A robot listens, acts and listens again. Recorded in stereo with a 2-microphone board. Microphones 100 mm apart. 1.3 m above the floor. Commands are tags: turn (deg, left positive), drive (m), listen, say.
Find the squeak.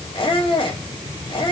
<turn deg="60"/>
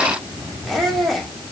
<say>Found it: a squeak, straight ahead, 2 to 4 m away.</say>